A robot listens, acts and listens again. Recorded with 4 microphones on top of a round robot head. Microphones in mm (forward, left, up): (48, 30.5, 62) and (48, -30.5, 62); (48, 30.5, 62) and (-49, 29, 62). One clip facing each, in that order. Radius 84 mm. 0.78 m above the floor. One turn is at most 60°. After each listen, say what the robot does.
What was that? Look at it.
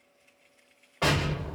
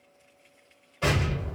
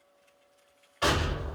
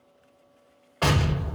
Turn 60° left.
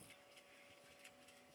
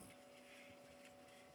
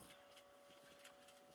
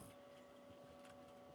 Turn 60° left.
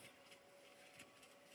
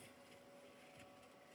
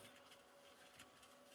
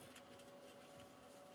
Turn 20° left.
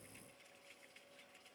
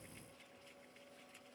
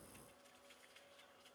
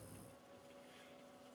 Facing where the explosion came from. I can't hear it now.